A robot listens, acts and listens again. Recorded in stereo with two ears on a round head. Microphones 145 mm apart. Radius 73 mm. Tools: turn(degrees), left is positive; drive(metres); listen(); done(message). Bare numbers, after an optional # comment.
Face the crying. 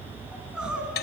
turn(-30)
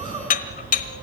# So it is at 150° right.
turn(-150)
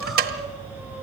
done("Facing the crying.")